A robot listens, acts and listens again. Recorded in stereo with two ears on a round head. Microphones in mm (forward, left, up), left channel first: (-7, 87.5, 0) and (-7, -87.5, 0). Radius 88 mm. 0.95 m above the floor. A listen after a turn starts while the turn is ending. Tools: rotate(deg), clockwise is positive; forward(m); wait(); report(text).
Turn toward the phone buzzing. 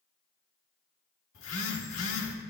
rotate(-90)
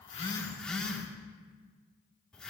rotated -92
report("Facing the phone buzzing.")